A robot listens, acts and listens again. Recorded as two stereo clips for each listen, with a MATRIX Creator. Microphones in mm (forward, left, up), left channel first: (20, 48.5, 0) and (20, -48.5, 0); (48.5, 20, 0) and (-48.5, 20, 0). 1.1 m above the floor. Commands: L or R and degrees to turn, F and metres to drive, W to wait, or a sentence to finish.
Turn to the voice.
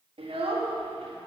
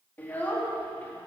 R75
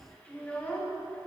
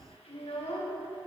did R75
L10
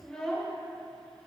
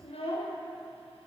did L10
Found it: a child speaking, straight ahead, 1 to 2 m away.